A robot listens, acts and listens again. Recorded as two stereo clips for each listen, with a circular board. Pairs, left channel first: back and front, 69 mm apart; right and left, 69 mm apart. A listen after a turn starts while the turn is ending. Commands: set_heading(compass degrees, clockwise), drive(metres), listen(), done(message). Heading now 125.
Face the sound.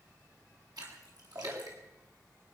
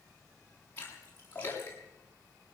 set_heading(155)
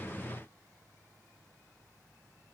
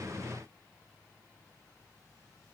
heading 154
done("Facing where the splash came from. I can't hear it now.")